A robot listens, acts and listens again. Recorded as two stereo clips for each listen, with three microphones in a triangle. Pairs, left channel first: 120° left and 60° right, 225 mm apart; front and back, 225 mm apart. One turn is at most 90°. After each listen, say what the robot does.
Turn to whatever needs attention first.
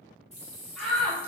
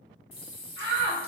Turn 90° right.
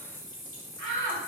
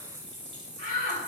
Turn 45° right.
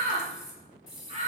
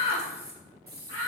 Found it: a shout, straight ahead.